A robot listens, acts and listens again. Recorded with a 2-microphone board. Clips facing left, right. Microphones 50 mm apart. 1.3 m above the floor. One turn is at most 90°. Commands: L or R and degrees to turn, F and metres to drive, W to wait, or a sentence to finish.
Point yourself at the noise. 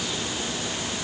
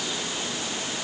W
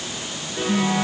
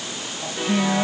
R75
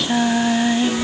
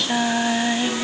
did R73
Facing the singing.